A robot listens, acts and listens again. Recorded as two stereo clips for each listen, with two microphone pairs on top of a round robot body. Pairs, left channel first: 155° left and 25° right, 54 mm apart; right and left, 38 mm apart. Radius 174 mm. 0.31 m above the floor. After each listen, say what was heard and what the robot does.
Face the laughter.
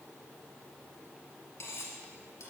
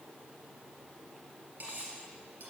Keep listening.
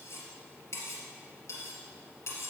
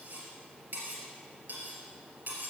Keep listening.
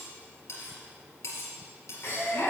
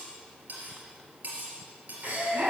The laughter: 115° left. Turn 115° left.
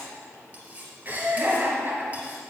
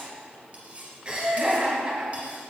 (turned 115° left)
The laughter is now 25° left. Turn 25° left.
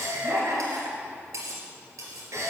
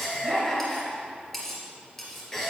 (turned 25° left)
The laughter is now 20° right. Turn 20° right.
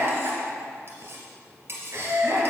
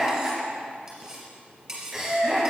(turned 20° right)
Facing the laughter.